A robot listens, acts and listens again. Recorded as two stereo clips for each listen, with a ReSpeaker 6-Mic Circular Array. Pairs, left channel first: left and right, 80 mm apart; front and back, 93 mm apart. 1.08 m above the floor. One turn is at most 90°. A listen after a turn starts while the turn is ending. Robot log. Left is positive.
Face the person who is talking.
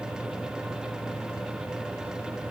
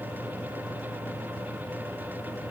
cmd idle
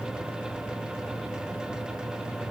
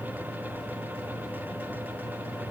cmd idle
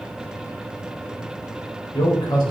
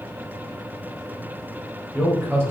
note: The man speaking: 115° left.
cmd yaw +90
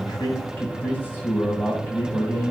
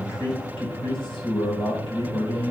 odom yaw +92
note: The man speaking is now 25° left.
cmd yaw +25
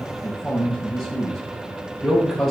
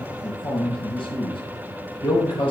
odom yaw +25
end: Found it: a man speaking, straight ahead, over 4 m away.